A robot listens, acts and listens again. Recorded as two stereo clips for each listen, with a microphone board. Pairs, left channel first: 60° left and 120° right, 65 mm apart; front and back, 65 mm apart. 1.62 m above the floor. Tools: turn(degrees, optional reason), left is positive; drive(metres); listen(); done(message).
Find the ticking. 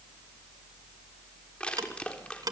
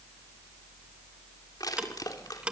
turn(degrees=-105, reason="The ticking: 105° right.")
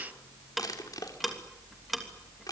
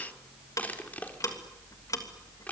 turn(degrees=-30, reason="The ticking is now 30° right.")
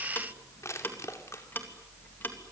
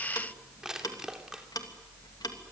done("Found it: ticking, straight ahead.")